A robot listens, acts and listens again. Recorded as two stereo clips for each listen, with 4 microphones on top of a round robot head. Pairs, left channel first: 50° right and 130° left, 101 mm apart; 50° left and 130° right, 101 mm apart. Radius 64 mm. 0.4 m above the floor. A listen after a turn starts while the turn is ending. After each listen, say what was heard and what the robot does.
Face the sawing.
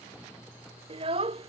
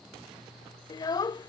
Keep listening.
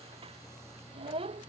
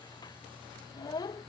Keep listening.
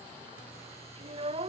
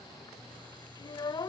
I can't make out sawing to turn to.